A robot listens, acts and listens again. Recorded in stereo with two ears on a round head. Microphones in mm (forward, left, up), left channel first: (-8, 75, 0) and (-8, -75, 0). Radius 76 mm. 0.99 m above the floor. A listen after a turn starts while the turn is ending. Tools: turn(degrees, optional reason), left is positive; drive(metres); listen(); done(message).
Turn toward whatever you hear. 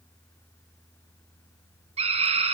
turn(degrees=-35, reason="The scream: about 35° right or 145° right.")
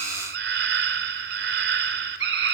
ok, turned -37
turn(degrees=-105, reason="So it is at 105° right.")
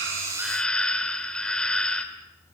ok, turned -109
done("Facing the scream.")